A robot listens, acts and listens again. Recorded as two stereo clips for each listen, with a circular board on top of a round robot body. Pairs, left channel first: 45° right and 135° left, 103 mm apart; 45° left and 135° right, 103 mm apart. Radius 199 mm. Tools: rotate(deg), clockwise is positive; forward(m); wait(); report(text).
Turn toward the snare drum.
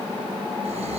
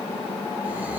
wait()
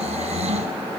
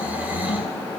wait()
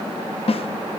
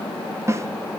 rotate(70)
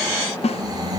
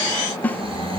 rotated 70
rotate(30)
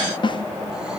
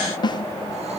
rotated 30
report("Found it: a snare drum, straight ahead, 1 to 2 m away.")